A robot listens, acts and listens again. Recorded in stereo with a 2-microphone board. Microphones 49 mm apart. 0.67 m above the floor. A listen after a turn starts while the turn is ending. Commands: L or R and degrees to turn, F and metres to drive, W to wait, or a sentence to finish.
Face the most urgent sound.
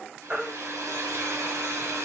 R20
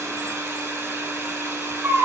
R140
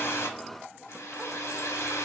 W
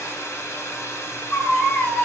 L25
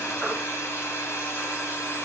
W
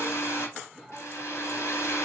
W
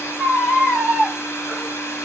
Facing the baby crying, 1 to 2 m away.